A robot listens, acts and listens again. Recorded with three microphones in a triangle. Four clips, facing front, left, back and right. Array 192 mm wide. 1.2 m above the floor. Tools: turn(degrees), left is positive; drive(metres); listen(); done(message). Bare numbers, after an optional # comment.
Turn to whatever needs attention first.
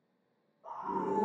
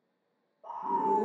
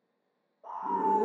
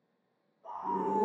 # The scream: 145° left.
turn(145)
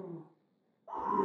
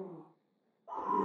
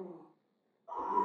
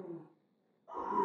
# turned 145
# The scream is now 35° left.
turn(35)
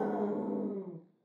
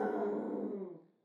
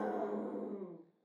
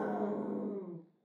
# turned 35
done("Found it: a scream, straight ahead, under 1 m away.")